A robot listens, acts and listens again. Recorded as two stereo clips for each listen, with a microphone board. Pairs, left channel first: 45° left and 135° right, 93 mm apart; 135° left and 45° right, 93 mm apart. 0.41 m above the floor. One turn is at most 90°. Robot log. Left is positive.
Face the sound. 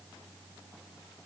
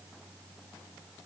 cmd idle
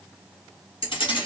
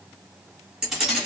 note: The keys jangling: 40° left.
cmd yaw +40
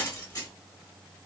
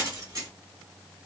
end: Found it: keys jangling, straight ahead.